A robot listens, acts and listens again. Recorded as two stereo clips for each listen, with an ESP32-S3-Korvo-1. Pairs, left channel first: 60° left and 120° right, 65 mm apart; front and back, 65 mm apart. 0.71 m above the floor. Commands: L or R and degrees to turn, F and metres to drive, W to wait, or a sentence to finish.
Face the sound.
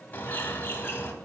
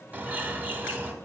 L120
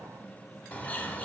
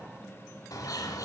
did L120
Found it: a bird, straight ahead, 1 to 2 m away.